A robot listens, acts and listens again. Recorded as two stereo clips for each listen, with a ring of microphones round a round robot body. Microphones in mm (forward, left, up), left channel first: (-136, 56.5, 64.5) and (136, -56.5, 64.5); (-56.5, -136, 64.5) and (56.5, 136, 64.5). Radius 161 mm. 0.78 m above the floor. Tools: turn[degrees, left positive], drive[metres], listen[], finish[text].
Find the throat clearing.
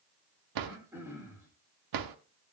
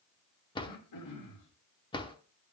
Thought: The throat clearing: 105° right.
Action: turn[-105]
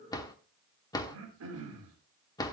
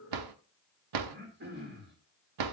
Thought: The throat clearing is now 15° left.
Action: turn[15]
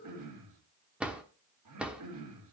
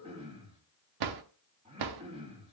Action: finish[Facing the throat clearing.]